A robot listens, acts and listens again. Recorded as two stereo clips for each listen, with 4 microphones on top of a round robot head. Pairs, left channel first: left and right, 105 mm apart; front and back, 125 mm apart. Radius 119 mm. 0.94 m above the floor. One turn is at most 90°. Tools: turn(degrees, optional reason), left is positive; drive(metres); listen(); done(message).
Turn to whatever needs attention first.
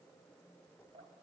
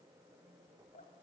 listen()
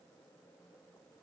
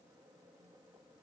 listen()
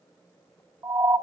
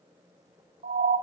turn(degrees=-90, reason="The siren: 140° right.")
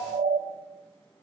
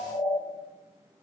turn(degrees=-55, reason="The siren is now 55° right.")
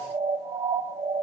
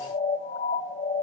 turn(degrees=-20, reason="The siren is now 20° right.")
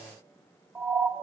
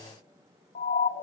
done("Found it: a siren, straight ahead.")